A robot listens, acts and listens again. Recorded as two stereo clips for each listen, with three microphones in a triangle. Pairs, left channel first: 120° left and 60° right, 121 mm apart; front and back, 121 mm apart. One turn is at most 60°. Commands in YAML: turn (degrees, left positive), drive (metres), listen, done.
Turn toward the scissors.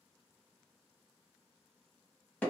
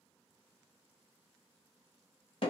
listen: true
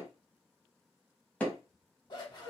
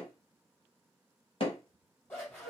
turn: 60
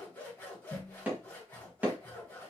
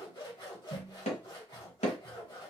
turn: 45
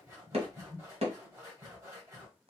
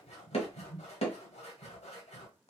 done: "Facing the scissors, 2 to 4 m away."